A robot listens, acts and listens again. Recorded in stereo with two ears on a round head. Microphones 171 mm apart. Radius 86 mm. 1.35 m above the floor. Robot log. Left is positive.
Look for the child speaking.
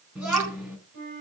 cmd yaw -30
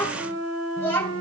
note: So it is at 10° left.
cmd yaw +10
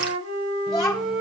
end: Facing the child speaking, over 4 m away.